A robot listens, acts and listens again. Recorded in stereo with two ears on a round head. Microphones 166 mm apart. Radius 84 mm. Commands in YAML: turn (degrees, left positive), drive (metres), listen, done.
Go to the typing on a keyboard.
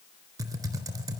turn: -20
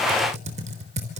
turn: -140
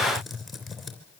drive: 1.0
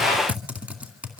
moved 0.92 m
turn: -10
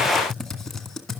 drive: 1.0
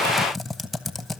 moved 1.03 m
drive: 1.0
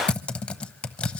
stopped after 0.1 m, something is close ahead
done: "Arrived at the typing on a keyboard, straight ahead."